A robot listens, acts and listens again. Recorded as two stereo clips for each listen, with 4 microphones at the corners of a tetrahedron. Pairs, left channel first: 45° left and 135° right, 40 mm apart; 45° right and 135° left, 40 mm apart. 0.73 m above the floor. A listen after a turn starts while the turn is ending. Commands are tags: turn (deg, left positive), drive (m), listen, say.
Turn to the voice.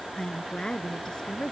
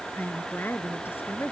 <turn deg="-25"/>
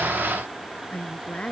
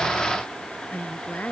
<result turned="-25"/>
<turn deg="-15"/>
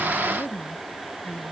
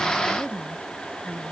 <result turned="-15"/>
<say>Found it: a woman speaking, straight ahead.</say>